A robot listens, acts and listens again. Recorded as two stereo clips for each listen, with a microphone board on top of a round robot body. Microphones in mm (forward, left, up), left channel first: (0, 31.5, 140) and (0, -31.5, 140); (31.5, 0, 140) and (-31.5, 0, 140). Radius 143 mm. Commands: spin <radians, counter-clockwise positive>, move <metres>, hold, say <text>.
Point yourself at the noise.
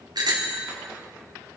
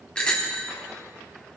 spin -1.31
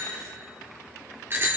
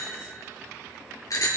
spin -0.52
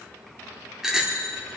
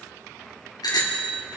say Facing the bicycle bell.